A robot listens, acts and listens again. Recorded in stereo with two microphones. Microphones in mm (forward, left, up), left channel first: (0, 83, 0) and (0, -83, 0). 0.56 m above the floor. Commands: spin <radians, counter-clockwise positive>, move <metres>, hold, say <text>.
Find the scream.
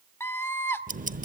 spin 0.52
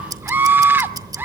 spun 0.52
spin -0.26
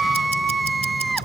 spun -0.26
say Facing the scream.